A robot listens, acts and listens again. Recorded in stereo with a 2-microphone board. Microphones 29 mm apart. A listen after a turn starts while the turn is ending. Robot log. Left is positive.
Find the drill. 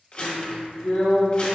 note: The drill: about 65° left or 115° left.
cmd yaw +65
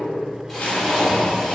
end: Facing the drill, 1 to 2 m away.